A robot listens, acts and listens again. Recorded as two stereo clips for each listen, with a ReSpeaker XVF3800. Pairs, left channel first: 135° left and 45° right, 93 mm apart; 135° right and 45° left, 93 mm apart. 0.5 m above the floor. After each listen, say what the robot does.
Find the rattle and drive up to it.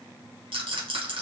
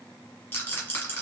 Turn 65° right.
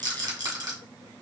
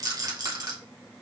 Drive 1.0 m forward.
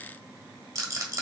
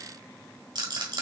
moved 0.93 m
Turn 10° left.
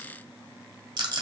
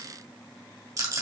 Drive 1.0 m forward.
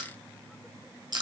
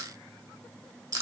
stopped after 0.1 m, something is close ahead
Arrived at the rattle, straight ahead.